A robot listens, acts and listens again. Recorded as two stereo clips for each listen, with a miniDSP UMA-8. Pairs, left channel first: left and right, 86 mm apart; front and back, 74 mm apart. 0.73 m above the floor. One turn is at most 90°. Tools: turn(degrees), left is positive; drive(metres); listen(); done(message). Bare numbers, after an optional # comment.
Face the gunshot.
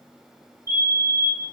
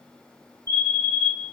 listen()
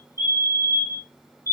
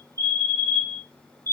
listen()
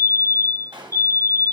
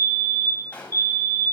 # The gunshot: 70° right.
turn(-70)
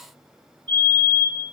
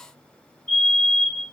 done("Facing where the gunshot came from. I can't hear it now.")